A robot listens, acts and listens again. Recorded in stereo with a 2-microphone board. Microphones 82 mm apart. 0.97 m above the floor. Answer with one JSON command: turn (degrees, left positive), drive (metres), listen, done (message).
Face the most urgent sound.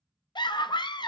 {"turn": 65}
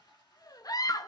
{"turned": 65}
{"turn": 50}
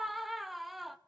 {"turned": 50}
{"done": "Facing the scream."}